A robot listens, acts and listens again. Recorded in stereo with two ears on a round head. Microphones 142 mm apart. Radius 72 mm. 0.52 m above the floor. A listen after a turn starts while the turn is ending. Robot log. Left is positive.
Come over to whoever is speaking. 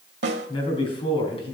note: The man speaking: about 35° left or 145° left.
cmd yaw +35
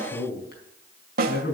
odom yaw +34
note: So it is at 110° left.
cmd yaw +110
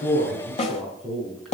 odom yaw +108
cmd fwd 1.0
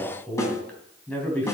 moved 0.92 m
note: The man speaking is now 10° left.
cmd yaw +10
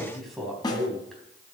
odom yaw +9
cmd fwd 1.0
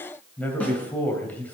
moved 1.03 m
note: The man speaking is now 10° left.
cmd yaw +10
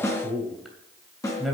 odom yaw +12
cmd fwd 1.0
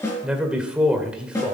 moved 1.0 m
cmd fwd 1.0
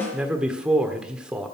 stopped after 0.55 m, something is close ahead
note: The man speaking is now 10° right.
cmd yaw -10
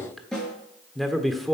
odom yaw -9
end: I am next to the man speaking.